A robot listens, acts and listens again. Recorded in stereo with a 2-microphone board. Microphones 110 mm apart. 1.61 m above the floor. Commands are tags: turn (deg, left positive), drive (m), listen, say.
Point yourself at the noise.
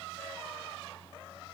<listen/>
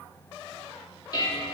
<turn deg="35"/>
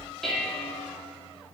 <say>Facing the dishes clattering.</say>